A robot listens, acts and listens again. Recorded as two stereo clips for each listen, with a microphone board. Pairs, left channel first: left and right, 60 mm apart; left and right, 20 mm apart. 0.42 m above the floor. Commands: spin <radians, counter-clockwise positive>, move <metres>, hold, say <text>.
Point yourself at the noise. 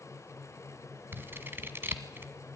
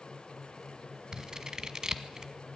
spin -0.70
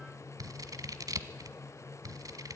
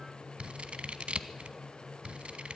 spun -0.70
spin -1.75
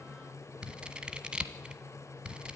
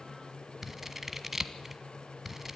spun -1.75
spin -0.26
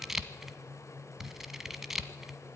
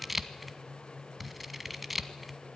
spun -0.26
say Facing the scissors, 1 to 2 m away.